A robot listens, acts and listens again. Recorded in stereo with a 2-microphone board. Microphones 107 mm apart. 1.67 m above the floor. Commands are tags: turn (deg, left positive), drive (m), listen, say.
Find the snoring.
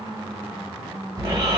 <turn deg="-40"/>
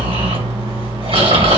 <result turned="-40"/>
<turn deg="-95"/>
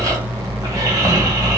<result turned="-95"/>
<turn deg="-40"/>
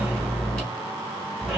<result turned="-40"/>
<say>Facing the snoring, 2 to 4 m away.</say>